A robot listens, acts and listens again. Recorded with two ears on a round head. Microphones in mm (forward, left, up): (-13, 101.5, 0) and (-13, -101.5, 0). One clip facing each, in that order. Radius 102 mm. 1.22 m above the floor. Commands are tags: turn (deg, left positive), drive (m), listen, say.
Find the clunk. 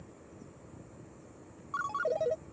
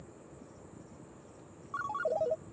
<listen/>
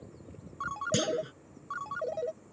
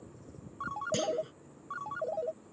<turn deg="20"/>
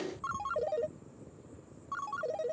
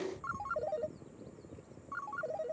<listen/>
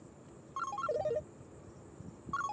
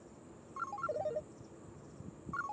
<say>I heard a clunk, but can't make it out now. It was about straight ahead or 140° left.</say>